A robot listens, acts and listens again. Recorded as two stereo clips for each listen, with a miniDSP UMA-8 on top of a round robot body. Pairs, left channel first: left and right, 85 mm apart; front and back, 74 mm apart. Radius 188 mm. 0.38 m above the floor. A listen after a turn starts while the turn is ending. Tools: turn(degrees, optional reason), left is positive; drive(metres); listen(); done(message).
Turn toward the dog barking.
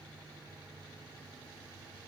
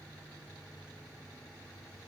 listen()
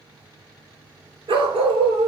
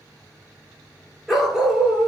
turn(degrees=-95, reason="The dog barking: 95° right.")
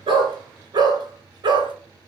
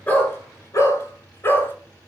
turn(degrees=-60, reason="The dog barking is now 60° right.")
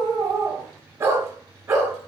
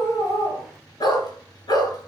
turn(degrees=-30, reason="The dog barking is now 30° right.")
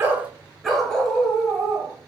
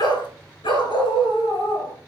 done("Found it: a dog barking, straight ahead, 2 to 4 m away.")